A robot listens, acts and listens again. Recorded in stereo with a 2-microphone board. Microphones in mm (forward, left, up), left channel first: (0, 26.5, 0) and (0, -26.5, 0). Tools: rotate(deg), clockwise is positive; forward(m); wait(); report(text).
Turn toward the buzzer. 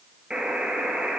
rotate(15)
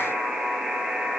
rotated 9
rotate(30)
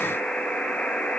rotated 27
rotate(-15)
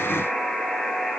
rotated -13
report("Facing the buzzer, 1 to 2 m away.")